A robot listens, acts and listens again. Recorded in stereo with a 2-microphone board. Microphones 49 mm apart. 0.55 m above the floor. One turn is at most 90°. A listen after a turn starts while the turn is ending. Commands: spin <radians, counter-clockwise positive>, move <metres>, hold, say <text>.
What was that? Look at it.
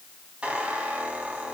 spin -0.44
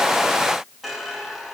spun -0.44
say Facing the squeak.